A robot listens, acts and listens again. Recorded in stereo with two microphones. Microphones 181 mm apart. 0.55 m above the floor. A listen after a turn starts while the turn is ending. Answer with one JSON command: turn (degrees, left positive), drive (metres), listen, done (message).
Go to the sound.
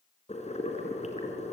{"turn": 40}
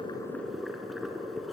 {"drive": 1.0}
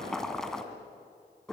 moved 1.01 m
{"drive": 1.0}
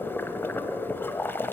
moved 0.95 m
{"turn": 10}
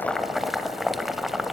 {"drive": 1.0}
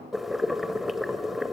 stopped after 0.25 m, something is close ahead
{"done": "I am next to the boiling."}